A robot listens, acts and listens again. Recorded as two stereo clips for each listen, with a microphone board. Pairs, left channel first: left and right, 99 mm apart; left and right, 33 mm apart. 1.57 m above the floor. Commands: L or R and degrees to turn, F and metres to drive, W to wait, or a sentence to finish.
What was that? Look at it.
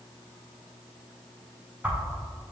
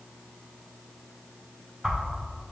R15
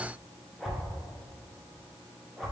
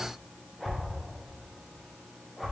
Facing the whoosh, under 1 m away.